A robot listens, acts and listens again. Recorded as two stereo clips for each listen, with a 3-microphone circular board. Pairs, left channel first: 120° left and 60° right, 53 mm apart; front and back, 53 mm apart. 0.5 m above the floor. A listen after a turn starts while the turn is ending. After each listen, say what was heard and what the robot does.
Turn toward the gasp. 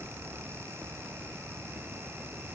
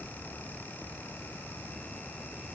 Keep listening.
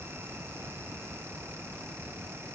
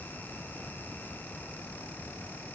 Keep listening.
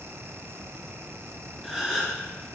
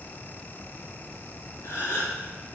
The gasp: 30° left. Turn 30° left.
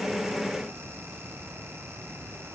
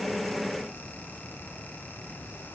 Facing where the gasp came from. I can't hear it now.